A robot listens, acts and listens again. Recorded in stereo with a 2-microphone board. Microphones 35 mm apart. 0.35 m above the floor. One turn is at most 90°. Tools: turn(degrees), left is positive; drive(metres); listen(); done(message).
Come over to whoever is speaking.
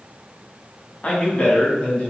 turn(degrees=35)
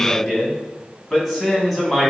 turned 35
drive(metres=1.0)
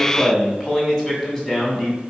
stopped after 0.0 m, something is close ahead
turn(degrees=10)
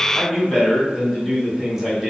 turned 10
done("Blocked. The man speaking is further on, straight ahead.")